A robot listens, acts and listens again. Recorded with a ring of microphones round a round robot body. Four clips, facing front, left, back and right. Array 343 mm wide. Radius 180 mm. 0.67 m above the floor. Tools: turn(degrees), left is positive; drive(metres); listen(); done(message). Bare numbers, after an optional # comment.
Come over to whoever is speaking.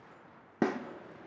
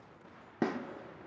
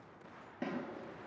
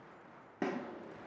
listen()
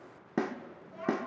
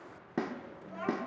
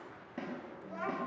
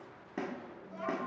# The child speaking: 150° left.
turn(150)
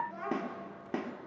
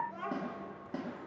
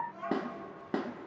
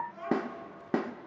# The child speaking is now 30° left.
turn(30)
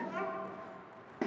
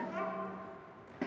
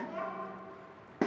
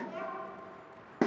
# The child speaking is now 20° left.
turn(20)
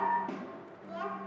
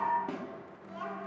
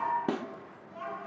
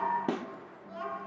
drive(1.0)
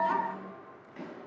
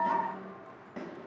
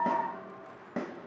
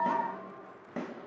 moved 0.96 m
drive(1.0)
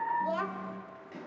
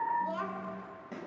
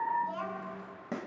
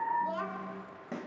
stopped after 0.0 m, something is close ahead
done("I am next to the child speaking.")